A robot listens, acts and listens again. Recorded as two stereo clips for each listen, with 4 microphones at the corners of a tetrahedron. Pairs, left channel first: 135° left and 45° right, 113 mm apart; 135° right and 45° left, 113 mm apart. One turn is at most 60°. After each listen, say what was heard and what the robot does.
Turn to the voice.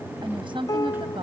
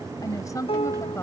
The woman speaking: 75° right. Turn 60° right.
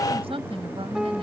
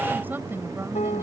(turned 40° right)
The woman speaking is now 25° right. Turn 25° right.
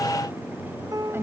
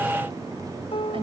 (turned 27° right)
The woman speaking is now 20° left. Turn 20° left.
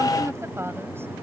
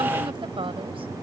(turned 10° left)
The woman speaking is now 20° left. Turn 20° left.
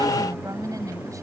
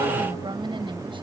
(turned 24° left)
The woman speaking is now 10° left. Turn 10° left.
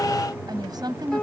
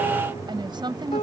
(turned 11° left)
Facing the woman speaking.